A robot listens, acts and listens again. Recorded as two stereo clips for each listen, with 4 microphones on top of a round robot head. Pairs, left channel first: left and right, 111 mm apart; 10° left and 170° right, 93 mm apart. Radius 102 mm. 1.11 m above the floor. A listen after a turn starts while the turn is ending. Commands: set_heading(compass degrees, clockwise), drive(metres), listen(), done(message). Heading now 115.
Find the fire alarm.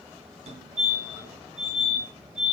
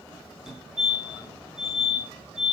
set_heading(200)
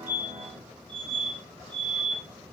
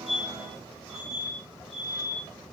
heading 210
set_heading(200)
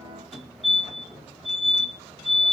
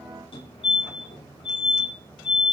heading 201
done("Facing the fire alarm.")